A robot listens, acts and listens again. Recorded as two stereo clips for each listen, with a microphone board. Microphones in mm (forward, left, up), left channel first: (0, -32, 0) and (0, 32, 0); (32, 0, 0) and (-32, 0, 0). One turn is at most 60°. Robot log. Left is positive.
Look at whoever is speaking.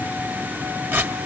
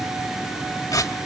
cmd idle
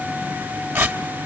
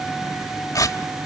cmd idle
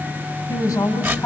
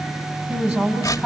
note: The woman speaking: 125° right.
cmd yaw -60
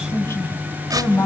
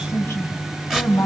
note: The woman speaking is now 65° right.
cmd yaw -60
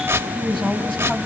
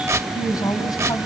note: The woman speaking is now 15° right.
cmd yaw -15
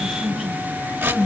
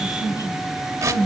note: The woman speaking is now 10° right.
cmd yaw -10
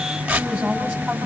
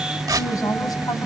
end: Found it: a woman speaking, straight ahead.